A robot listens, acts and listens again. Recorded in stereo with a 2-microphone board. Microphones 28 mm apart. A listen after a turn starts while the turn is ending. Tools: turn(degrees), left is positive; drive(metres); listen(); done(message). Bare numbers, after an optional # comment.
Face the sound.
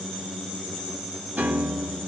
# The piano: about 70° right or 110° right.
turn(-70)
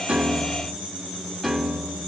# So it is at 10° right.
turn(-10)
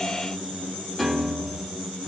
done("Found it: a piano, straight ahead, 2 to 4 m away.")